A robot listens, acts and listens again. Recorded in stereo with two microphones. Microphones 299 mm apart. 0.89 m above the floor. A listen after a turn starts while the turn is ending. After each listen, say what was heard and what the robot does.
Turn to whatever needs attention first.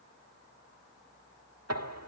Keep listening.
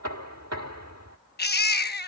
The baby crying: about 35° left or 145° left. Turn 35° left.
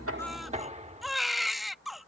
Facing the baby crying.